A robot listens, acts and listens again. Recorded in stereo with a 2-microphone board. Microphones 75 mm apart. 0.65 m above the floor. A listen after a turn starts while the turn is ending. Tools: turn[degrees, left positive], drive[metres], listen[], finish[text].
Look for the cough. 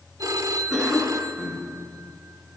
Action: turn[-30]
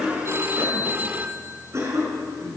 Thought: So it is at 140° right.
Action: turn[-140]
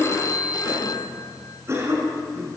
Thought: The cough is now 40° right.
Action: turn[-40]
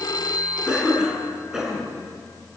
Thought: The cough is now 10° right.
Action: turn[-10]
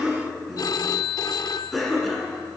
Action: finish[Found it: a cough, straight ahead, over 4 m away.]